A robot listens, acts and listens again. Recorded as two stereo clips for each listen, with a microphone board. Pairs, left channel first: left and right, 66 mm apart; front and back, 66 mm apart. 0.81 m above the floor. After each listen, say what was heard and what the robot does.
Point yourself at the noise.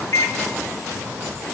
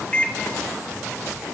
The microwave: 65° left. Turn 65° left.
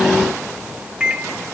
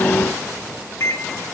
The microwave is now 20° right. Turn 20° right.
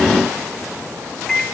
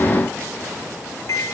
Facing the microwave, 1 to 2 m away.